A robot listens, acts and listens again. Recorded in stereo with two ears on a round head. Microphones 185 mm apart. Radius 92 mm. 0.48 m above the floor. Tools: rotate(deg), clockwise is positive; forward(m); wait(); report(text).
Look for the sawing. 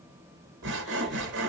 rotate(60)
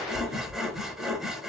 report("Facing the sawing.")